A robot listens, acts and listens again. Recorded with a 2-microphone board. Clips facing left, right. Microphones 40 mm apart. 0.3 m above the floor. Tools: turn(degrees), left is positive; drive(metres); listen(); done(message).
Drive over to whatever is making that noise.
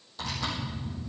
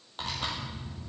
turn(degrees=-55)
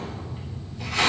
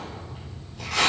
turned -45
turn(degrees=-80)
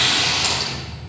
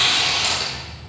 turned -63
turn(degrees=-20)
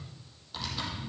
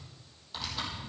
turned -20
drive(metres=1.0)
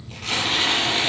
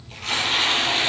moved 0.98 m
drive(metres=1.0)
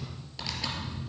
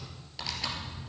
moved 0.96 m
drive(metres=1.0)
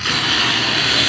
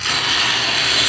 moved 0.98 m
turn(degrees=10)
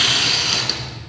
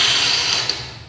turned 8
drive(metres=1.0)
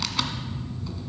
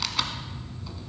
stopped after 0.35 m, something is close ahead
done("Arrived at the tearing paper, straight ahead.")